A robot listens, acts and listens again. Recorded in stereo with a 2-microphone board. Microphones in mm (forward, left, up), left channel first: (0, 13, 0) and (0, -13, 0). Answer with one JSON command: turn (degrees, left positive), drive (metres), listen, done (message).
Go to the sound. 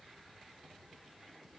{"listen": true}
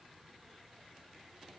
{"listen": true}
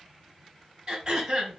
{"turn": -35}
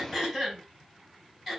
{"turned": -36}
{"drive": 1.0}
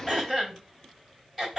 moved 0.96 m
{"turn": -10}
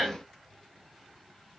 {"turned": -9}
{"drive": 1.0}
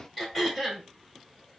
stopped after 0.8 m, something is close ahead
{"done": "I am next to the throat clearing."}